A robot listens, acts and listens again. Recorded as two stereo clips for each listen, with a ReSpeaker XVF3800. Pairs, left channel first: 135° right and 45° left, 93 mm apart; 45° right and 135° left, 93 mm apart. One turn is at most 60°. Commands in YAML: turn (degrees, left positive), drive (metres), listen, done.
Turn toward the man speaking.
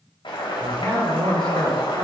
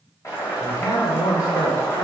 done: "Facing the man speaking, 2 to 4 m away."